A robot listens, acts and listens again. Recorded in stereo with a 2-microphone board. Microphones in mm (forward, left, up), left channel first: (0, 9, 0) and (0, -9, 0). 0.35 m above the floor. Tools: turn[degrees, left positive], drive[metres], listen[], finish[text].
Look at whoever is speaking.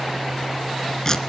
Action: listen[]
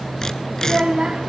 Thought: The child speaking: about 50° right or 130° right.
Action: turn[-50]
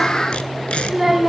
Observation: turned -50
Action: finish[Facing the child speaking.]